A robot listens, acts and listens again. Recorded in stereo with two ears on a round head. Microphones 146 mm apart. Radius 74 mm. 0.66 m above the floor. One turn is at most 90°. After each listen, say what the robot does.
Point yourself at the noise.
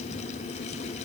Keep listening.
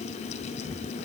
Keep listening.
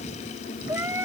Turn 30° right.
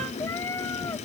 Turn 20° left.
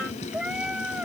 Facing the cat meowing.